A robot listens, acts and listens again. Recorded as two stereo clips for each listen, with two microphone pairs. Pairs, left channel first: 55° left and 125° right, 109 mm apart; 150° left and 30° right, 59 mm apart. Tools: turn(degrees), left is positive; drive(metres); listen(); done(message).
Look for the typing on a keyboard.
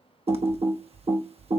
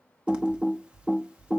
turn(degrees=-105)
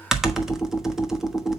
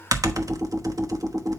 turn(degrees=-40)
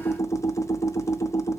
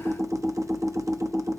turn(degrees=-10)
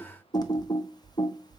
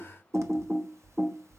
done("Facing the typing on a keyboard, 1 to 2 m away.")